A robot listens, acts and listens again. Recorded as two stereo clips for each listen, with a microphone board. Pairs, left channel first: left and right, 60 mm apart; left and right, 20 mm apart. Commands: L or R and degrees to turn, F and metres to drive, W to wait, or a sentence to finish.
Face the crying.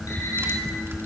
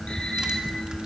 W
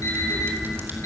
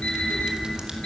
W
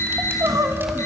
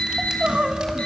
R70
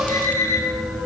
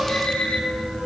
W
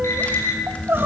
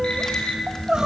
R40
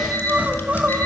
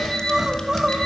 R25
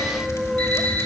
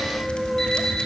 R10
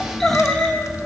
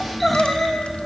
Facing the crying, 1 to 2 m away.